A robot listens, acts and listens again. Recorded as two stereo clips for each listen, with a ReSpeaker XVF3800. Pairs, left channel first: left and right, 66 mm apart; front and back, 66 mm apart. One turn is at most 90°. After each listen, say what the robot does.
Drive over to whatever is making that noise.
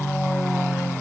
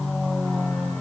Keep listening.
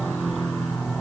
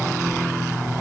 Keep listening.
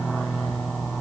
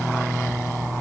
I can't make out anything.